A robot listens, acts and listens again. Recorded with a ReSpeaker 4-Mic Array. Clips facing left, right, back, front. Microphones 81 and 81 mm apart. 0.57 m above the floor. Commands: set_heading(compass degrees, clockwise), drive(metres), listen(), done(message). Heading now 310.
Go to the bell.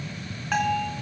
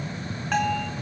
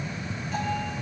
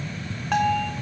drive(1.0)
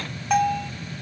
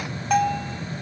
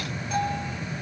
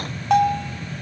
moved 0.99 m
drive(1.0)
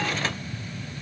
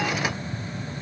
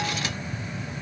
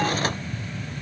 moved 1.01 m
listen()
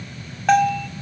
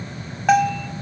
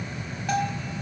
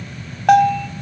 drive(1.0)
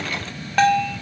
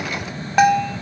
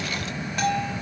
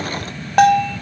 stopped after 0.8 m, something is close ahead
set_heading(325)
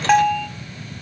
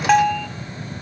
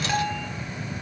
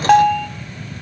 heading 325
done("I am next to the bell.")